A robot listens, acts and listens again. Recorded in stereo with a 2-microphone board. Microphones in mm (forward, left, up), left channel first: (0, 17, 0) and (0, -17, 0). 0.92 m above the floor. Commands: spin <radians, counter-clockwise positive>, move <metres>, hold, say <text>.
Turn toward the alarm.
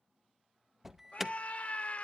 spin -0.52
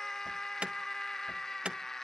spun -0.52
spin -2.36
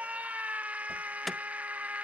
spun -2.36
say Facing the alarm, under 1 m away.